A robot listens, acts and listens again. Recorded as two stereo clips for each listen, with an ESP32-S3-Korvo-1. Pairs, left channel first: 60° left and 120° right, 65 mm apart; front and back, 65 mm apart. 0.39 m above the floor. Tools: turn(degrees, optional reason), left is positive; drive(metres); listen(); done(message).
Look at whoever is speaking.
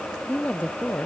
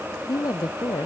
done("Facing the woman speaking.")